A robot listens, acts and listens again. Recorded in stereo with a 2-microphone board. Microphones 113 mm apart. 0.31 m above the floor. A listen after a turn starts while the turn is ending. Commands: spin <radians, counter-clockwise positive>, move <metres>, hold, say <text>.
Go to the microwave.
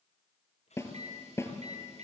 spin -1.22
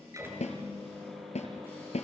move 1.0
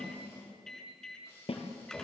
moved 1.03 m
move 1.0
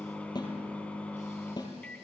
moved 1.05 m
spin 0.17
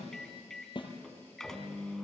move 1.0
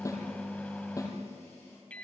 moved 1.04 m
spin 0.26
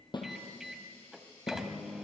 move 1.0
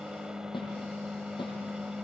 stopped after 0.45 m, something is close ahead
spin -0.17
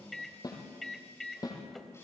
say Arrived at the microwave, straight ahead.